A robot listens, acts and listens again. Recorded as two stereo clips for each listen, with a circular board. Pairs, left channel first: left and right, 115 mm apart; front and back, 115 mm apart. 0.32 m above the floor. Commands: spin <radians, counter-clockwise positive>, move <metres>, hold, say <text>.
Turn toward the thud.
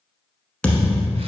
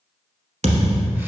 spin 2.97
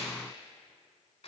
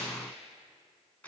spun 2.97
say Facing where the thud came from. I can't hear it now.